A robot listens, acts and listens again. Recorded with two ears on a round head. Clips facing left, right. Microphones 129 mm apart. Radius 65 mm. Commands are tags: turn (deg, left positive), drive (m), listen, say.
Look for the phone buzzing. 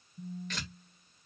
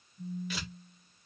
<turn deg="50"/>
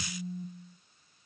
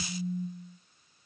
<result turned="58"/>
<turn deg="65"/>
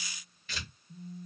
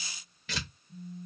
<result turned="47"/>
<turn deg="20"/>
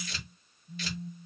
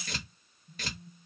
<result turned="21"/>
<say>Facing the phone buzzing, 1 to 2 m away.</say>